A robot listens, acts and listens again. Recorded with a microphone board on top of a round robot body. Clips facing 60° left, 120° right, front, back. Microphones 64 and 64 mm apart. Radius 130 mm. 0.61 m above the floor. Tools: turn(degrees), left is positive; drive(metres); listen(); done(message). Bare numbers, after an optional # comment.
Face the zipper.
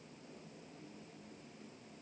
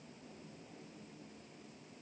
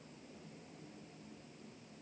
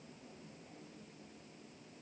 listen()
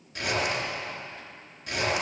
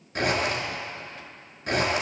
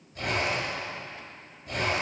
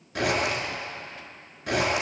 # The zipper: 170° right.
turn(-170)
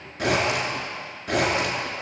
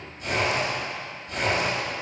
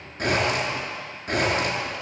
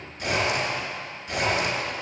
# The zipper is now 50° left.
turn(50)
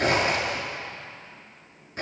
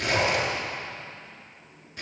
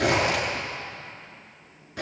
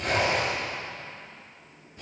done("Facing the zipper, over 4 m away.")